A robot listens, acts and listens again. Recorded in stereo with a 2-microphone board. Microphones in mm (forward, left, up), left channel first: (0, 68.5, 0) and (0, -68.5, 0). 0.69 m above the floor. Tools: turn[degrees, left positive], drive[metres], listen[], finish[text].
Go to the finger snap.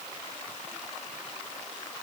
Action: listen[]
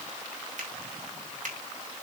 Thought: The finger snap: about 70° right or 110° right.
Action: turn[-70]
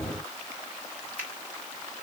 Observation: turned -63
Thought: So it is at 15° right.
Action: turn[-15]
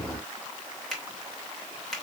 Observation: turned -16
Action: drive[1.0]
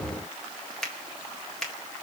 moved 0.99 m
Action: drive[1.0]
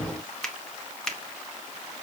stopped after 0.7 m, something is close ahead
Action: finish[Arrived at the finger snap, straight ahead.]